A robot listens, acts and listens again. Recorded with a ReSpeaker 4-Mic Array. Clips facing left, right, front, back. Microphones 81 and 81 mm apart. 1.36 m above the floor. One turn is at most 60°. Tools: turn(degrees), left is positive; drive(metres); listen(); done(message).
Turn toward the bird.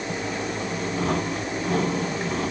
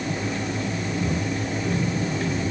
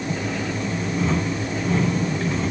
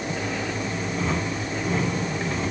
listen()
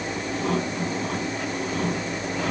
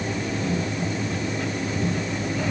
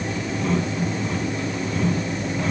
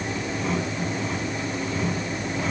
listen()
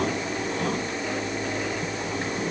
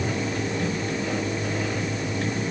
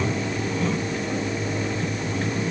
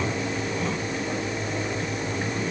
done("I can't make out a bird to turn to.")